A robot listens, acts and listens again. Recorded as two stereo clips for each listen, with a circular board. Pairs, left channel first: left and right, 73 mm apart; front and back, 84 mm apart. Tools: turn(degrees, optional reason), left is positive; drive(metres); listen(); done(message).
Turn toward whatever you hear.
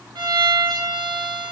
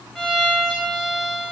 turn(degrees=-90, reason="The violin: 90° right.")
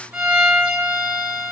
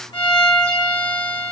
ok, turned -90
turn(degrees=-20, reason="The violin is now 20° right.")
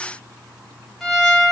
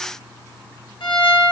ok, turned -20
done("Facing the violin.")